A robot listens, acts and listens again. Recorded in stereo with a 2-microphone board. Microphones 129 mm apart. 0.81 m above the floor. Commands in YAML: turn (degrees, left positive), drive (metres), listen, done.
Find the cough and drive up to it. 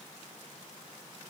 listen: true
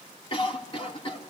turn: 40
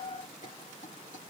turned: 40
listen: true
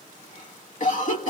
turn: 100
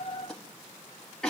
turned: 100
drive: 1.0
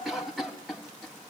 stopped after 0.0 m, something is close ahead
done: "Blocked. The cough is further on, straight ahead."